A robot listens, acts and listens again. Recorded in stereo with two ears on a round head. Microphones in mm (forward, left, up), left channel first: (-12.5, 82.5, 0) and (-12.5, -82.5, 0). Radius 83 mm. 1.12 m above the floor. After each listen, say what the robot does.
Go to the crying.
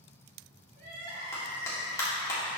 Turn 55° right.
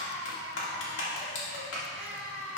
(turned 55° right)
Turn 70° right.
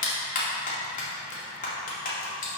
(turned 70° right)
Keep listening.
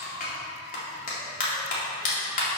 Keep listening.
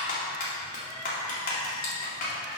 Facing where the crying came from. I can't hear it now. I did not reach it.